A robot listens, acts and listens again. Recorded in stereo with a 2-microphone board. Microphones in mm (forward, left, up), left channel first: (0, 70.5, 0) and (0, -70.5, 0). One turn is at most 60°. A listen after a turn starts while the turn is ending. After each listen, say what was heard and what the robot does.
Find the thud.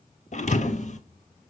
The thud: about 60° left or 120° left. Turn 60° left.
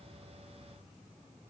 Keep listening.
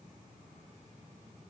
I heard a thud, but can't make it out now. It was about straight ahead or 60° left.